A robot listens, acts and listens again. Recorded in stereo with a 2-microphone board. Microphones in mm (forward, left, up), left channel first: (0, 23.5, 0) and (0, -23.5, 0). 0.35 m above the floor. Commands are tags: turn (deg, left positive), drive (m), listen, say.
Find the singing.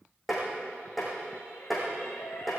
<turn deg="60"/>
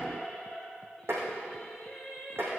<say>Facing the singing, over 4 m away.</say>